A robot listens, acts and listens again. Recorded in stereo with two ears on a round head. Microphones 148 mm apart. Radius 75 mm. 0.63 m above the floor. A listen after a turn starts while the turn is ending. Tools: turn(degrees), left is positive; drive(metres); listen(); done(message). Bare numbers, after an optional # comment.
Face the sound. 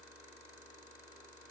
listen()
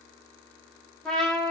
turn(30)
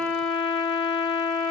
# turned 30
# So it is at 145° left.
turn(145)
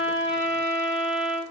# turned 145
done("Found it: a trumpet, straight ahead, 2 to 4 m away.")